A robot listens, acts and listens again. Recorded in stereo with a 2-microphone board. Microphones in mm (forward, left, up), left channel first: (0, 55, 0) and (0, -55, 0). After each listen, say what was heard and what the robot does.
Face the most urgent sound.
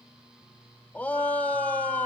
Turn 30° left.
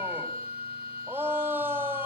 So it is at 20° right. Turn 20° right.
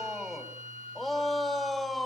Facing the shout.